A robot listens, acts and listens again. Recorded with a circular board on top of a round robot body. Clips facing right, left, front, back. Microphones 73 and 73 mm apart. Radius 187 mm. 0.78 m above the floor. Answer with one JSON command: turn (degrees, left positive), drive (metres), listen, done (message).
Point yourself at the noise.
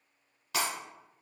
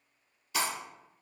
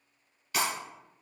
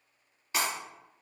{"turn": -110}
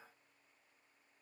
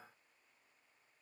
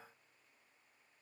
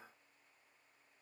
{"done": "I heard breaking glass from this way, but can't make it out now."}